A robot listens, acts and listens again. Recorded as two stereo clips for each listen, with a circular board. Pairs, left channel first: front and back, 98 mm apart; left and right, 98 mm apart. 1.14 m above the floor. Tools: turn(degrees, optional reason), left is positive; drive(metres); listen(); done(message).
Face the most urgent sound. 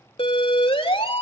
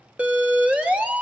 turn(degrees=-15, reason="The siren: 15° right.")
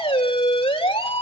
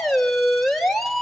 done("Found it: a siren, straight ahead, 2 to 4 m away.")